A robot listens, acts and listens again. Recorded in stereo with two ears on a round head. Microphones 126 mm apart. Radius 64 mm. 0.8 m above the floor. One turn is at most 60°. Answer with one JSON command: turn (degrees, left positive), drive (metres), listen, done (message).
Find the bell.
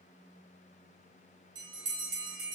{"turn": -30}
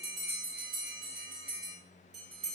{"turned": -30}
{"done": "Facing the bell."}